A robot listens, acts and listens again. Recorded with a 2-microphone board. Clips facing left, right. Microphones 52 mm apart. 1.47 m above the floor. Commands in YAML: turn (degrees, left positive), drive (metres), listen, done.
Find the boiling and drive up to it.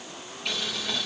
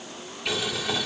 turn: -30
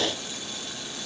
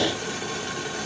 turn: -140
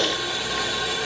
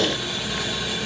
drive: 1.0
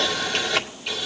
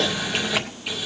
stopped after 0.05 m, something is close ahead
done: "Blocked. The boiling is further on, straight ahead."